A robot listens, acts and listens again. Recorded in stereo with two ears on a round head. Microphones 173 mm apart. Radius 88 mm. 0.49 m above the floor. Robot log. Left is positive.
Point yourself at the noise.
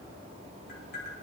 note: The tapping: about 50° left or 130° left.
cmd yaw +50
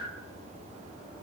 cmd idle
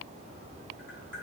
cmd idle
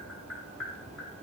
end: Facing the tapping, 2 to 4 m away.